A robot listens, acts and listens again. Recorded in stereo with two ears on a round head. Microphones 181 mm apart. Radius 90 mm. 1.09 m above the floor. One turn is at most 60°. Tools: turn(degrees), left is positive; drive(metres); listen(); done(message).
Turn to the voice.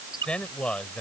turn(degrees=30)
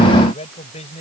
turn(degrees=60)
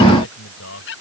turn(degrees=60)
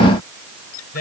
turn(degrees=50)
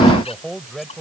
done("Found it: a man speaking, straight ahead.")